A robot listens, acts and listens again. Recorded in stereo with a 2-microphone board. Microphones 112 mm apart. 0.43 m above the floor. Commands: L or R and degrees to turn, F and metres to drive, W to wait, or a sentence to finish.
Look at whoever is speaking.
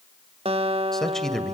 L30
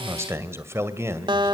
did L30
R25
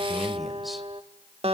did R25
Found it: a man speaking, straight ahead, 2 to 4 m away.